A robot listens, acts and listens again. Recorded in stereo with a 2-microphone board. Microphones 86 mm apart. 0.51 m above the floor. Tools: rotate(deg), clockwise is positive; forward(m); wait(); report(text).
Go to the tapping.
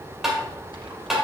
rotate(30)
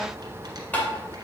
rotate(-25)
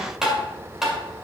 forward(1.0)
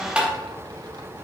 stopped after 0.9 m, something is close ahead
rotate(20)
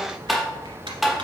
report("I am next to the tapping.")